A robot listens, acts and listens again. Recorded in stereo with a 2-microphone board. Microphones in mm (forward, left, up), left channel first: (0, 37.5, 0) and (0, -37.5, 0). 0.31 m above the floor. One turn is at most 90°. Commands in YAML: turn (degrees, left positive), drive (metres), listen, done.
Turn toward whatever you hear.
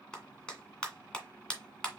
turn: 30
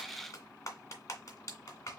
turn: 90
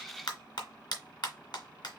turn: 80
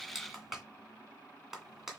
done: "Found it: a clap, straight ahead."